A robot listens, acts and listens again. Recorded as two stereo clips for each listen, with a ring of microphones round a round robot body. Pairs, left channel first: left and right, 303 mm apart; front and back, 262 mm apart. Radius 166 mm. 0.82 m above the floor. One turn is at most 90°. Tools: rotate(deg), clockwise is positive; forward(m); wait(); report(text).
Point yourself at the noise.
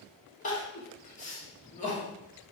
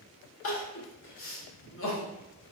rotate(-30)
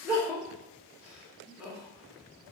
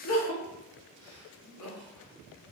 report("Facing the crying.")